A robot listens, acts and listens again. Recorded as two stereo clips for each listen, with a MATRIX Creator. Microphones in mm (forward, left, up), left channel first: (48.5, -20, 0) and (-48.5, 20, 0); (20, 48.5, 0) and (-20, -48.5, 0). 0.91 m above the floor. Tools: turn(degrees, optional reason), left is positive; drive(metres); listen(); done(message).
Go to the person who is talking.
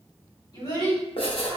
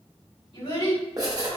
turn(degrees=35, reason="The child speaking: 35° left.")
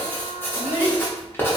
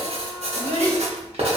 drive(metres=1.0)
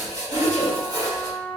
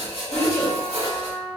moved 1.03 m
drive(metres=1.0)
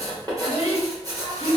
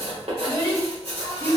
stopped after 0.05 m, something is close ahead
done("Arrived at the child speaking, straight ahead.")